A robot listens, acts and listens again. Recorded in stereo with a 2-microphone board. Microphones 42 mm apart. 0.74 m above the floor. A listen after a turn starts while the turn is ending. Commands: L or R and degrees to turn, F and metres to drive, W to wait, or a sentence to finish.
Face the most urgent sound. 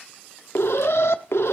L75
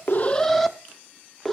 Found it: an alarm, straight ahead, under 1 m away.